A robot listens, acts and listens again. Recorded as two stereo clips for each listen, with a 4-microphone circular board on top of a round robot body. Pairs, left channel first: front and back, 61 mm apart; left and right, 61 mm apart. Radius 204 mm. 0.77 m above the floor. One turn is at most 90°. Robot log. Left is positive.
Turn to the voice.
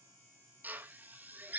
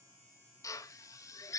cmd idle
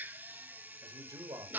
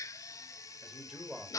note: The man speaking: 175° right.
cmd yaw -90
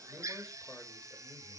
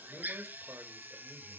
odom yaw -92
note: Nothing new. It was at 80° right.
cmd yaw -80
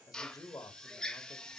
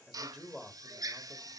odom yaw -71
note: The man speaking is now 10° right.
cmd yaw -10
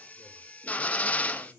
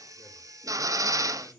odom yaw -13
cmd idle
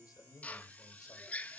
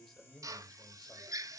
end: Facing the man speaking.